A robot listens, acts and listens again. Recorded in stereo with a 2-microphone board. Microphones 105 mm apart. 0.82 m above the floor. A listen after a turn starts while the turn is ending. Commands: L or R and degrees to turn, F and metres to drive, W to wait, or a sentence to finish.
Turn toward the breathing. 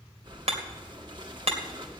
R45
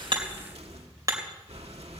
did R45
R85
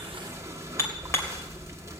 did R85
R30
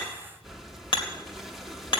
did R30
Found it: breathing, straight ahead.